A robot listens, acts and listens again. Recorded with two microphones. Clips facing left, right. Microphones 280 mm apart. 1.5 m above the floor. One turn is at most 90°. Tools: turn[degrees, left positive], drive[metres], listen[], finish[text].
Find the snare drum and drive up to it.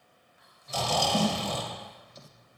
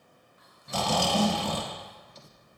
Thought: The snare drum: about 25° left or 155° left.
Action: turn[25]
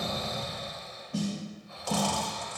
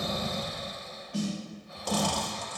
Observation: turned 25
Thought: So it is at 125° left.
Action: turn[90]
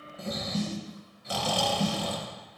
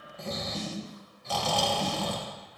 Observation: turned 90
Thought: The snare drum is now 65° left.
Action: turn[65]
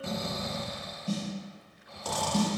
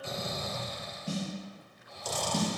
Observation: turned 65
Thought: The snare drum is now 15° right.
Action: turn[-15]
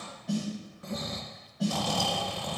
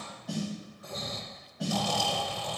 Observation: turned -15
Action: drive[1.0]
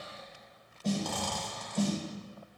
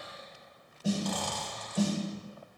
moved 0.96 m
Thought: The snare drum is now 10° right.
Action: turn[-10]
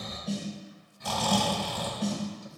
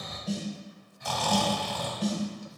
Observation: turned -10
Action: drive[1.0]
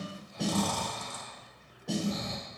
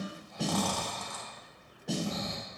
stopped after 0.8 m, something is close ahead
Action: finish[Arrived at the snare drum, straight ahead.]